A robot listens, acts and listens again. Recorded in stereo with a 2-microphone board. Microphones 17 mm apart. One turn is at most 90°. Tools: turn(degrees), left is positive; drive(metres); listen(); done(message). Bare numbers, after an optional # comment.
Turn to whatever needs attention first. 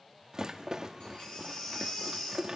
# The baby crying: about 60° left or 120° left.
turn(60)
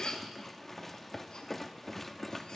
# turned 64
# So it is at 55° left.
turn(55)
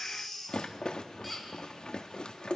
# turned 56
done("Found it: a baby crying, straight ahead.")